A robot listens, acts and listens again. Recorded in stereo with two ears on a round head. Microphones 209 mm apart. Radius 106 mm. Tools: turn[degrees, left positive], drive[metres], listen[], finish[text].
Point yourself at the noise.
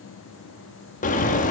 Thought: The bird: about 30° left or 150° left.
Action: turn[30]
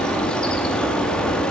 Action: finish[Facing the bird, under 1 m away.]